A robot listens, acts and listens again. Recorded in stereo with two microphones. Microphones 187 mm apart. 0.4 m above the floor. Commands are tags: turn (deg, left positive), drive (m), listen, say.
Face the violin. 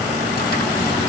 <listen/>
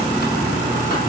<listen/>
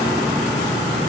<say>I can't make out a violin.</say>